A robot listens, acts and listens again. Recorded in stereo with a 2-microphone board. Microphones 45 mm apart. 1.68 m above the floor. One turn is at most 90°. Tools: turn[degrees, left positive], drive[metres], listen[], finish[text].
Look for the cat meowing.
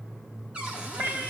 Thought: The cat meowing: about 55° right or 125° right.
Action: turn[-55]
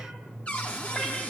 Action: listen[]
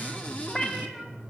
Action: finish[Facing the cat meowing, over 4 m away.]